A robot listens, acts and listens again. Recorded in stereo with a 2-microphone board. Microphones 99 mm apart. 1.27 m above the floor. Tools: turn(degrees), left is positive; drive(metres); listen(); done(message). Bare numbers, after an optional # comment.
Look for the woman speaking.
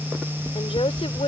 turn(90)
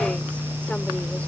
listen()
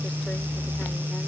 listen()
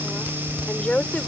# The woman speaking is now 10° left.
turn(10)
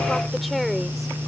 done("Facing the woman speaking.")